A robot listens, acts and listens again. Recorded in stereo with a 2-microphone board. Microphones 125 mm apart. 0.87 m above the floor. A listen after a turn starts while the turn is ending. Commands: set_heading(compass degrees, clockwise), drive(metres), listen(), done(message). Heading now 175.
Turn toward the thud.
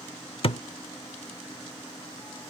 set_heading(125)
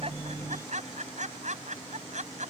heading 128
listen()
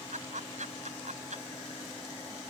done("I heard a thud, but can't make it out now. It was about straight ahead or 85° left.")